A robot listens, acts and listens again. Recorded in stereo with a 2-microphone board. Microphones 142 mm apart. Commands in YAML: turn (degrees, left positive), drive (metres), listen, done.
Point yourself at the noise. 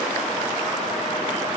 listen: true
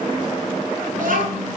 turn: -70
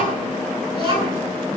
turn: -40
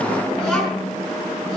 done: "Found it: a child speaking, straight ahead, over 4 m away."